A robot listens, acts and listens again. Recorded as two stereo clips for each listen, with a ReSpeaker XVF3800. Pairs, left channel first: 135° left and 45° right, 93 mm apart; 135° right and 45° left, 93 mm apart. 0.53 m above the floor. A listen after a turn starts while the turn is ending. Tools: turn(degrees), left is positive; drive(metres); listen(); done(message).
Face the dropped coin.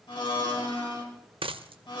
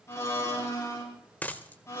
turn(degrees=-60)
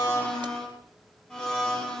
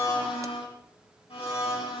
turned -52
turn(degrees=-10)
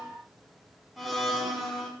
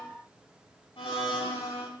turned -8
done("Facing where the dropped coin came from. I can't hear it now.")